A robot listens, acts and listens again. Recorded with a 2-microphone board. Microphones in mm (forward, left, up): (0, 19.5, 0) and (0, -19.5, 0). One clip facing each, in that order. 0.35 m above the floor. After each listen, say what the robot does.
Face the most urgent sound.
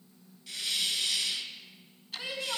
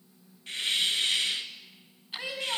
Turn 60° right.
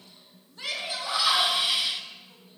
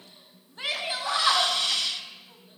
Turn 45° right.
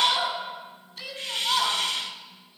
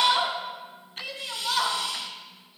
Facing the shout.